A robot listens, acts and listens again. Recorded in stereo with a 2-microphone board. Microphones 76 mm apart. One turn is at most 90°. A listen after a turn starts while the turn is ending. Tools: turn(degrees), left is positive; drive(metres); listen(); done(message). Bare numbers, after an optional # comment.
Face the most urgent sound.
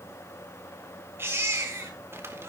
# The baby crying: about 30° right or 150° right.
turn(-30)
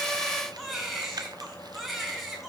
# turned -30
done("Facing the baby crying.")